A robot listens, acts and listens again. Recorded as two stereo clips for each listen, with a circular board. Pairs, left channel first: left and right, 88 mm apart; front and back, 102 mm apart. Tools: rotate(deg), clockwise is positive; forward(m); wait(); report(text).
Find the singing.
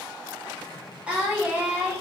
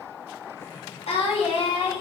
rotate(20)
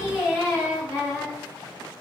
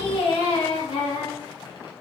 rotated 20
rotate(15)
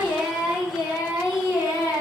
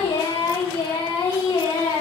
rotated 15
rotate(15)
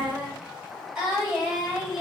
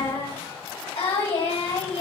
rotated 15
report("Found it: singing, straight ahead.")